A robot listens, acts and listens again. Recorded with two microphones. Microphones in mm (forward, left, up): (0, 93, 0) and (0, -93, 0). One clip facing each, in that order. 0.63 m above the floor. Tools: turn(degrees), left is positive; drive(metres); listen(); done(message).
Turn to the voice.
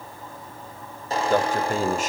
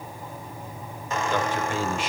turn(degrees=45)
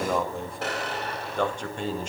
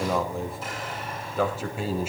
done("Found it: a man speaking, straight ahead.")